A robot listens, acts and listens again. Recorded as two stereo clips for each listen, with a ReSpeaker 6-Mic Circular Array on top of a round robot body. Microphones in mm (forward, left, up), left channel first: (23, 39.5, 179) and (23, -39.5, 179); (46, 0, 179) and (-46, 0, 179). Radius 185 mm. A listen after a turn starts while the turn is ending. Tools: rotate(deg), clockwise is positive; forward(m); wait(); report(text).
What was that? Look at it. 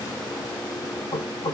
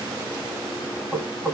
rotate(-95)
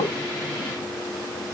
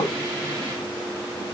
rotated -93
wait()
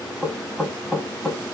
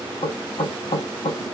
report("Facing the knocking, 1 to 2 m away.")